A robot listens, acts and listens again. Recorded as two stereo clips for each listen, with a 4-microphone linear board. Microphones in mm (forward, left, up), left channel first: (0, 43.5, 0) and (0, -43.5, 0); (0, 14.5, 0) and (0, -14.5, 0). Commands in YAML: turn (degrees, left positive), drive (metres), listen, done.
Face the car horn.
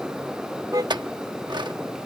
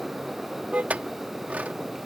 turn: -45
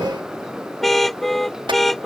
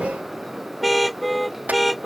done: "Found it: a car horn, straight ahead."